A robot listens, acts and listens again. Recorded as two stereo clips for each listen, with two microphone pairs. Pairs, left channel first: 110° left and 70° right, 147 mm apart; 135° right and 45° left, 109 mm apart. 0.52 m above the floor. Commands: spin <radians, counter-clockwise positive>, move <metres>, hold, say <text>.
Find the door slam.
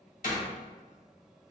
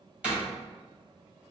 spin 2.09
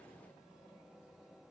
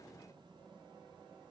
say I heard a door slam from this way, but can't make it out now.